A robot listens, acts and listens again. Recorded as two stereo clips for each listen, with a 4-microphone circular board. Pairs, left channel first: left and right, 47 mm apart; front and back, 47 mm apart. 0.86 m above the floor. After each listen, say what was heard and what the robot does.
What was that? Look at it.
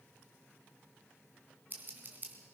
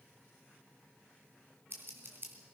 The scissors: 140° right. Turn 140° right.
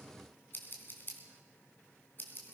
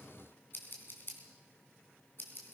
The scissors is now 45° left. Turn 45° left.
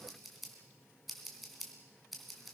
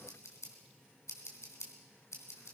Found it: scissors, straight ahead.